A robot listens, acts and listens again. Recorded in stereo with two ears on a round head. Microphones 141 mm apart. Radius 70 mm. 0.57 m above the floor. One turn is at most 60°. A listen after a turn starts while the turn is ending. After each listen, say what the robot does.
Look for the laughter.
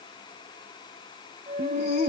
Turn 60° left.
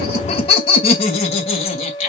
Turn 45° left.
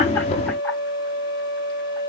Keep listening.
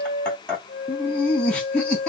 Turn 10° left.
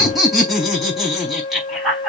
Facing the laughter, over 4 m away.